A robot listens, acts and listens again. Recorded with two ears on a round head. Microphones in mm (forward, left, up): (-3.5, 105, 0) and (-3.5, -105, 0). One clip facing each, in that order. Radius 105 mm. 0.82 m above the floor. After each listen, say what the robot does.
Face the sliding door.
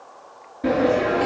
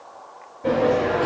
Turn 90° left.
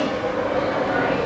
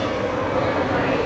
Turn 15° right.
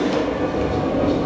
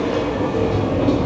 Found it: a sliding door, straight ahead, over 4 m away.